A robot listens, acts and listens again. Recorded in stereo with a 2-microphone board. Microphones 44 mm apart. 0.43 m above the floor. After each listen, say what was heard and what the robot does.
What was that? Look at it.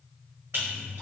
The splash: about 60° right or 120° right. Turn 60° right.
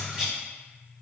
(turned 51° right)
So it is at 15° right. Turn 15° right.
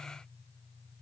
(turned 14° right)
Facing where the splash came from. I can't hear it now.